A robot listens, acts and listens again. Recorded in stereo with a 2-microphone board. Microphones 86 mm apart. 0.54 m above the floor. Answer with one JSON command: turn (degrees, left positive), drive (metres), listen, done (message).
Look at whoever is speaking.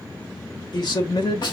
{"turn": 60}
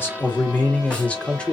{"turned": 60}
{"turn": 10}
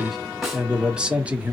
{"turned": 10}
{"turn": -20}
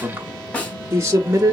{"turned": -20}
{"turn": -35}
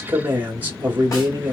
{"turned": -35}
{"turn": -20}
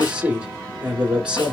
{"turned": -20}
{"turn": -10}
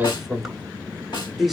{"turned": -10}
{"done": "Facing the man speaking, 1 to 2 m away."}